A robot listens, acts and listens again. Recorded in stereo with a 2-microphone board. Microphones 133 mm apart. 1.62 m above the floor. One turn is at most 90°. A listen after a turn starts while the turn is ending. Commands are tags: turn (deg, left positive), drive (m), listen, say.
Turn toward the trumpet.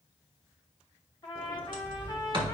<turn deg="35"/>
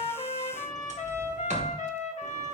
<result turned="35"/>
<turn deg="90"/>
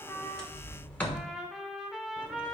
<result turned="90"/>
<say>Facing the trumpet, 1 to 2 m away.</say>